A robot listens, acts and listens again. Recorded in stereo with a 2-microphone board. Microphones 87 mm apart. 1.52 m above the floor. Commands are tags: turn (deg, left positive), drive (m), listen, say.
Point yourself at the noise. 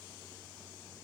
<listen/>
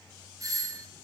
<turn deg="-40"/>
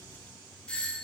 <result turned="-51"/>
<turn deg="10"/>
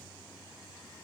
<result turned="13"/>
<listen/>
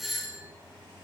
<say>Facing the doorbell, 1 to 2 m away.</say>